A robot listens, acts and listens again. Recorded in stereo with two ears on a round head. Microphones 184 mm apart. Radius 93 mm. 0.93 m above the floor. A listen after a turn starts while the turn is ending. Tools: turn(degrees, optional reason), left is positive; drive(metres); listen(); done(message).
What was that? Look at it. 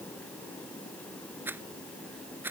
turn(degrees=-30)
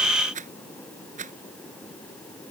turn(degrees=-140, reason="So it is at 140° right.")
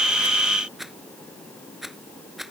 done("Facing the rattle.")